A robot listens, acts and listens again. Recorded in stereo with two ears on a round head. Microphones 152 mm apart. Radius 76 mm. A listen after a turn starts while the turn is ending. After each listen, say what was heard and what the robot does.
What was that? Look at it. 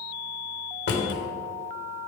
The drawer: about 70° left or 110° left. Turn 70° left.
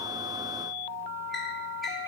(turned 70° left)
Keep listening.
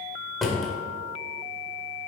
Facing the drawer, 1 to 2 m away.